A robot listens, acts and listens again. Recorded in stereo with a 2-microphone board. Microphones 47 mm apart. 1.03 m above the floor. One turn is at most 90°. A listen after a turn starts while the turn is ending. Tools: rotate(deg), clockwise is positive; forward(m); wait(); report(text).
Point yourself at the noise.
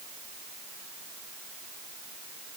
wait()
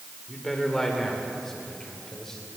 rotate(-30)
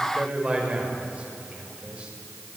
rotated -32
rotate(25)
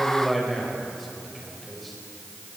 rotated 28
report("Facing the man speaking.")